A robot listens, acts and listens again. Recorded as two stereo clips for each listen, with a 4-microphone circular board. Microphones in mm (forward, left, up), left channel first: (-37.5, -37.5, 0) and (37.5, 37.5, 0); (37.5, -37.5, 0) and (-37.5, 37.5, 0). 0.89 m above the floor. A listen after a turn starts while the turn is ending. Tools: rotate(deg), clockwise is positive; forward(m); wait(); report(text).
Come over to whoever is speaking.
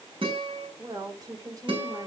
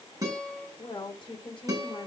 forward(1.0)
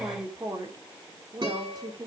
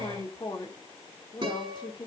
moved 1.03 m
forward(1.0)
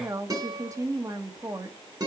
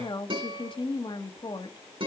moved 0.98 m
rotate(10)
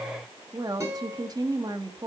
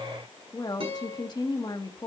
forward(1.0)
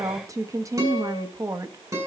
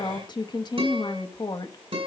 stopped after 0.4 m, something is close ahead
report("Arrived at the woman speaking, straight ahead.")